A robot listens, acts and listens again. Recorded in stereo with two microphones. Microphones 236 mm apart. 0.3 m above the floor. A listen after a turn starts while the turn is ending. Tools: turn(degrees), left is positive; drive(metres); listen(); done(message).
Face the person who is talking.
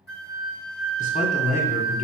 turn(degrees=35)
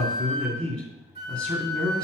done("Facing the man speaking, 2 to 4 m away.")